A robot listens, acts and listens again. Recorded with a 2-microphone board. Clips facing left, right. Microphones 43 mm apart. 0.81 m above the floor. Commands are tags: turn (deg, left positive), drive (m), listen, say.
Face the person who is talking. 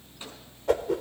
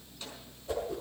<listen/>
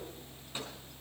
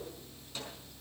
<listen/>
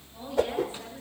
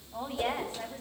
<turn deg="-50"/>
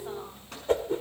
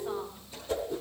<listen/>
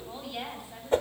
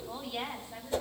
<say>Facing the woman speaking.</say>